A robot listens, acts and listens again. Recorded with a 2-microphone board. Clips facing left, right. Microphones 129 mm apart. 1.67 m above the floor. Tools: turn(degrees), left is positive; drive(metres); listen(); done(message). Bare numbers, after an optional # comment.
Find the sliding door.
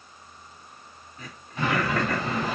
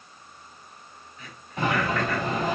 # The sliding door: about 40° right or 140° right.
turn(-40)
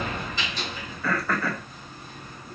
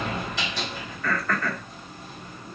# So it is at 100° right.
turn(-100)
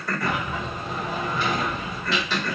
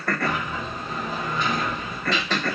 done("Found it: a sliding door, straight ahead.")